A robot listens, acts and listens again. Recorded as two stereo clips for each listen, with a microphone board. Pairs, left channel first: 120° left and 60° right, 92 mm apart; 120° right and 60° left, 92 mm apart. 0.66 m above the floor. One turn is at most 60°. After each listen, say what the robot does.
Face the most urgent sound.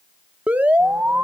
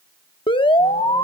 Turn 60° right.
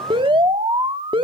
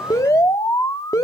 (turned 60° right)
Turn 60° right.
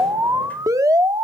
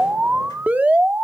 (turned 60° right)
Turn 10° right.
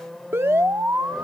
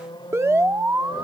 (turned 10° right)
Found it: an alarm, straight ahead, under 1 m away.